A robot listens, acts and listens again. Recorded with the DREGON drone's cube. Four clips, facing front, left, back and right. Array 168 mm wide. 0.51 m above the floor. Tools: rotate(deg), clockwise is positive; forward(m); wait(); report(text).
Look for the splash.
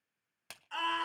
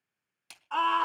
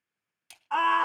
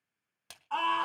rotate(30)
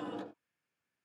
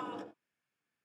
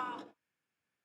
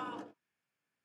report("Facing where the splash came from. I can't hear it now.")